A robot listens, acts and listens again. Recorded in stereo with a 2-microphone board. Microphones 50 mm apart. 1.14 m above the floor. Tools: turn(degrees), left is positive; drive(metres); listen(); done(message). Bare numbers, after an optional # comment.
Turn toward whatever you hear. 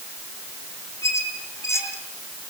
# The squeak: about 65° left or 115° left.
turn(65)
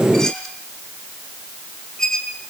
# So it is at 15° left.
turn(15)
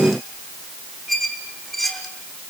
done("Found it: a squeak, straight ahead.")